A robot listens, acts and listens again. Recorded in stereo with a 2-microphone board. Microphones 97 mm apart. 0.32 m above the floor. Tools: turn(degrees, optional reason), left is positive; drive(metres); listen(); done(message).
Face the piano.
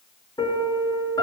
turn(degrees=45, reason="The piano: about 45° left or 135° left.")
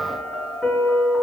done("Facing the piano, over 4 m away.")